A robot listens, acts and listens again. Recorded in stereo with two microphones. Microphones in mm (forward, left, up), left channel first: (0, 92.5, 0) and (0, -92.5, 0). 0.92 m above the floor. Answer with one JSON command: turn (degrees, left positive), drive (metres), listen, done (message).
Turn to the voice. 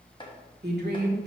{"turn": -60}
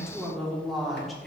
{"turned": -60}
{"done": "Found it: a woman speaking, straight ahead."}